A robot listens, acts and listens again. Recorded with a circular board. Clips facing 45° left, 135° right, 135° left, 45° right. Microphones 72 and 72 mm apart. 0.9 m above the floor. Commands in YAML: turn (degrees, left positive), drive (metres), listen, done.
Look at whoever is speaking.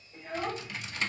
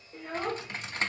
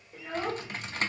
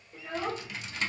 turn: -140
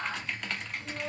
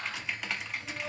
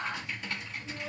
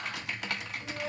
done: "Facing the child speaking, 1 to 2 m away."